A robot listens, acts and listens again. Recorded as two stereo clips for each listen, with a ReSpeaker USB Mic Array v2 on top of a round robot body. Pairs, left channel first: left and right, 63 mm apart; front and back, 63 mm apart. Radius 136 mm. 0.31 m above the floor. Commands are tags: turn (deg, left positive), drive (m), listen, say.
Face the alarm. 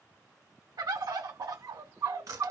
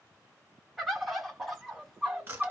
<listen/>
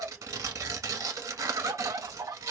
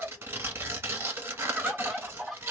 <listen/>
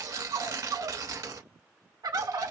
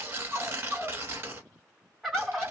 <say>I can't make out an alarm, only a bird and tearing paper.</say>